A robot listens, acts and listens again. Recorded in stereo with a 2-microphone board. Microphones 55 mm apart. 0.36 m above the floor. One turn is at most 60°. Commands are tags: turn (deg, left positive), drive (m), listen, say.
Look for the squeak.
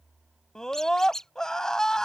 <turn deg="30"/>
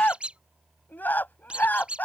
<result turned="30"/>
<turn deg="-20"/>
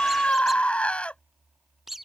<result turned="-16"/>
<say>Found it: a squeak, straight ahead.</say>